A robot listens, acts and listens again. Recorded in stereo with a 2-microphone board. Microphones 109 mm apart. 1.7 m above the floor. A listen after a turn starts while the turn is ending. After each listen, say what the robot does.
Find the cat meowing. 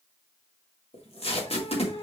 Turn 55° left.
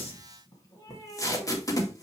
Turn 30° left.
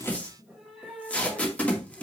Facing the cat meowing, 2 to 4 m away.